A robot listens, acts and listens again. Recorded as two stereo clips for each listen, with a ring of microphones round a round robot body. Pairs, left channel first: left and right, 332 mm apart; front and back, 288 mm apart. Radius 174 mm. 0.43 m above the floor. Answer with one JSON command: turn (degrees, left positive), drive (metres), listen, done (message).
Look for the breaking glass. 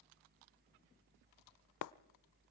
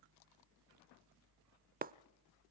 {"turn": 120}
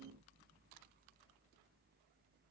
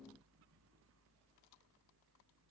{"done": "I heard breaking glass from this way, but can't make it out now."}